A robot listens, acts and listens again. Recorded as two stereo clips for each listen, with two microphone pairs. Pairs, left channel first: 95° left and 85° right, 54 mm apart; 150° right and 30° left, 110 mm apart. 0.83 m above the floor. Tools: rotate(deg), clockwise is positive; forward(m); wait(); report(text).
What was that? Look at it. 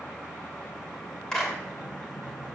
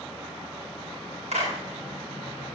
rotate(-20)
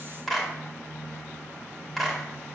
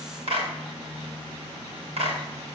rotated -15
report("Found it: a clap, straight ahead, over 4 m away.")